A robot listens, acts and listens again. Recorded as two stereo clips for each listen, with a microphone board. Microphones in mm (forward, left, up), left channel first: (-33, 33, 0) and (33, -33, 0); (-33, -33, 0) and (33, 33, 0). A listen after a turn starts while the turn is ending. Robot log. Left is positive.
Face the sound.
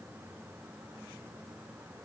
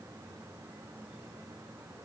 cmd idle
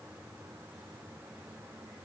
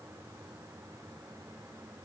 cmd idle
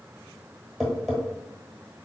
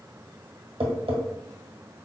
note: The tapping: 50° left.
cmd yaw +50
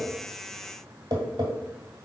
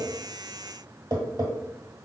end: Found it: tapping, straight ahead.